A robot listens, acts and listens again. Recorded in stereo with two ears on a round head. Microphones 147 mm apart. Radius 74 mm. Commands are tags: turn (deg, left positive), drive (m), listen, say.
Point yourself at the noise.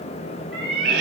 <turn deg="-65"/>
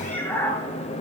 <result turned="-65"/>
<turn deg="15"/>
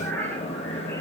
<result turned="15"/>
<turn deg="10"/>
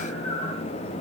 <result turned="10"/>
<turn deg="10"/>
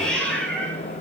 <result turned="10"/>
<say>Facing the cat meowing, over 4 m away.</say>